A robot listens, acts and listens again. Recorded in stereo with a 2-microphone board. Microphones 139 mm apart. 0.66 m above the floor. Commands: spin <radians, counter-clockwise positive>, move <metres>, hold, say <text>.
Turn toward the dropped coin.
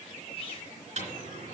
spin -0.79
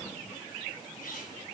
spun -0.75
hold
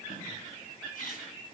say I heard a dropped coin, but can't make it out now. It was about 5° right or 90° right.